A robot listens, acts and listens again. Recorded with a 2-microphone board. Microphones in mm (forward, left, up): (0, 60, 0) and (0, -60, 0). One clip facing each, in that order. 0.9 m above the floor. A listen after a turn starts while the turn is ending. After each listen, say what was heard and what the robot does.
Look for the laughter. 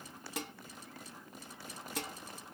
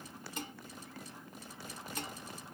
Keep listening.
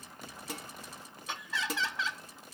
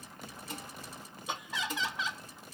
The laughter: about 15° right or 165° right. Turn 15° right.
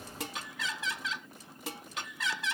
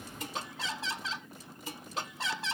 So it is at 150° right. Turn 150° right.
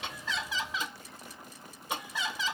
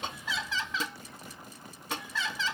The laughter is now 15° left. Turn 15° left.
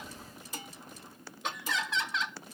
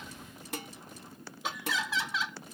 Facing the laughter.